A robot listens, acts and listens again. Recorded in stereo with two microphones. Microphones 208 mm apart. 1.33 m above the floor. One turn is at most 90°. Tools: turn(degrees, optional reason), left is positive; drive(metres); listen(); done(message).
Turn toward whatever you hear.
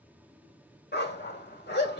turn(degrees=55, reason="The dog barking: about 55° left or 125° left.")
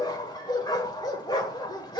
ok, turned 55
turn(degrees=25, reason="So it is at 25° left.")
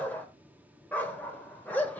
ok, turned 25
turn(degrees=10, reason="The dog barking is now 10° left.")
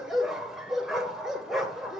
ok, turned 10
done("Found it: a dog barking, straight ahead, 1 to 2 m away.")